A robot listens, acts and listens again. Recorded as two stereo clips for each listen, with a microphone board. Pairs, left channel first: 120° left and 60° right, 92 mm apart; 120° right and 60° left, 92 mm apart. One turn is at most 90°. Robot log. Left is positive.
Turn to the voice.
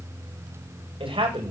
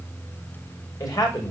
note: The man speaking: 75° right.
cmd yaw -75
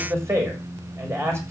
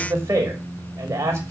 end: Found it: a man speaking, straight ahead.